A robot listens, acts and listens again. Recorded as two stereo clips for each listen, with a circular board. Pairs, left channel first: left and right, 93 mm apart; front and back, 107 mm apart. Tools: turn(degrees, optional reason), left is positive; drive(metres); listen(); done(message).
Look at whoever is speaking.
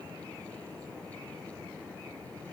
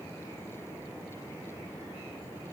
listen()
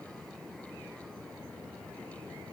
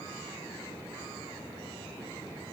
listen()
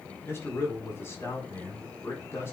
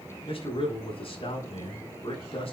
turn(degrees=25, reason="The man speaking: 25° left.")
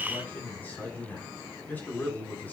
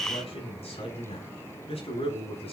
turn(degrees=20, reason="The man speaking is now 20° left.")
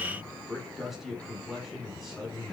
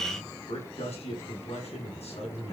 done("Facing the man speaking, over 4 m away.")